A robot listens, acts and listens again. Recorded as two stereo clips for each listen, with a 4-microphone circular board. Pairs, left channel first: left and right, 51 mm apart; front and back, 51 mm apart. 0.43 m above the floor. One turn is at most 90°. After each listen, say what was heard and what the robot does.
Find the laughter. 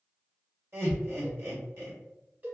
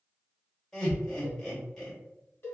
The laughter: 80° right. Turn 80° right.
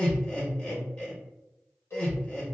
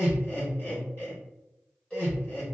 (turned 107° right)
The laughter is now 30° left. Turn 30° left.
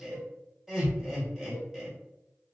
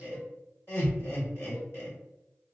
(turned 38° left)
The laughter is now 10° right. Turn 10° right.
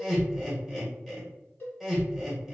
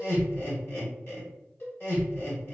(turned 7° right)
Found it: laughter, straight ahead, 1 to 2 m away.